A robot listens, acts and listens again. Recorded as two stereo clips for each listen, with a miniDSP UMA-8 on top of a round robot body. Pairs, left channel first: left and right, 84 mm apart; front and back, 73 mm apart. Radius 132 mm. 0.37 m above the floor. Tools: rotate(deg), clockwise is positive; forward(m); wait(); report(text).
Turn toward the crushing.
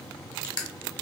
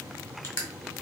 rotate(-55)
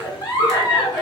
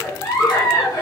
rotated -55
wait()
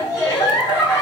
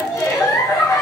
wait()
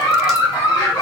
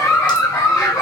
report("Facing where the crushing came from. I can't hear it now.")